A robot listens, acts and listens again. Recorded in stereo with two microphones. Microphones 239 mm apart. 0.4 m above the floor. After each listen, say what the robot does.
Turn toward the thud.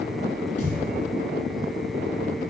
Turn 75° left.
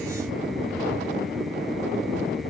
Keep listening.
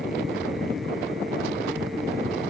I heard a thud, but can't make it out now. It was about straight ahead or 30° left.